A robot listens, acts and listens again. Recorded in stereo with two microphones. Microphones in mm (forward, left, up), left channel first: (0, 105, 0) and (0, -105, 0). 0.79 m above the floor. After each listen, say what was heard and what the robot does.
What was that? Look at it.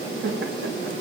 The laughter: about 65° right or 115° right. Turn 65° right.
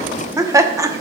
So it is at 15° right. Turn 15° right.
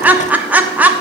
The laughter is now 10° right. Turn 10° right.
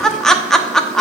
Facing the laughter.